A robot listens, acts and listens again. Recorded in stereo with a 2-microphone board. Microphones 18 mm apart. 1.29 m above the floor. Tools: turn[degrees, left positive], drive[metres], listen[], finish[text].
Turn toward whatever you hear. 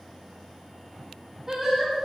Thought: The singing: about 25° right or 155° right.
Action: turn[-25]
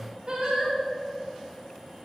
Thought: So it is at 130° right.
Action: turn[-130]
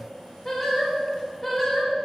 Thought: The singing is now 15° left.
Action: turn[15]
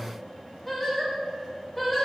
Action: finish[Facing the singing, over 4 m away.]